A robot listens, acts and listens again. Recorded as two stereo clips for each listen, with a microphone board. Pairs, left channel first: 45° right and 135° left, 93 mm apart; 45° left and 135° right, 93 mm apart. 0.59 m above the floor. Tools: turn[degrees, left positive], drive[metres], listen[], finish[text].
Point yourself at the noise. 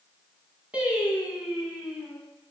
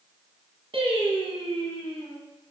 Thought: The singing: 140° right.
Action: turn[-140]
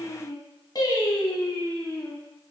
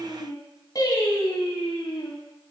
Thought: The singing is now 10° left.
Action: turn[10]
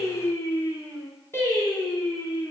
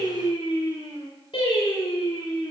Thought: The singing is now 15° left.
Action: turn[15]
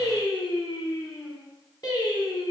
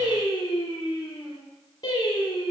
Action: finish[Facing the singing, 1 to 2 m away.]